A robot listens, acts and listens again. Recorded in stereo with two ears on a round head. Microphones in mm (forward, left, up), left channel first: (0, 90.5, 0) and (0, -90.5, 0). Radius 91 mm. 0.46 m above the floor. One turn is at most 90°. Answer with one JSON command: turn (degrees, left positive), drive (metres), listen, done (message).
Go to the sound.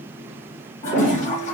{"turn": 40}
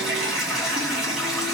{"drive": 1.0}
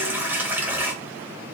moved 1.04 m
{"turn": -10}
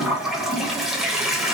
{"drive": 1.0}
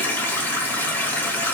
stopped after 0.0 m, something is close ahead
{"turn": 10}
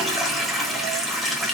{"done": "Arrived at the toilet flushing, straight ahead."}